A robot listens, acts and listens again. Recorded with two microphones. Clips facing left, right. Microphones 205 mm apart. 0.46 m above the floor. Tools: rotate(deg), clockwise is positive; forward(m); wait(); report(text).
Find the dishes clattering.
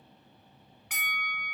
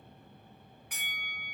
wait()
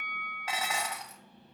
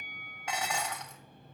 rotate(-30)
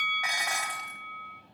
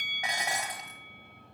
rotate(20)
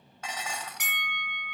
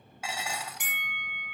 rotate(10)
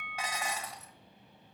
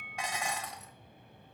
report("Facing the dishes clattering, 1 to 2 m away.")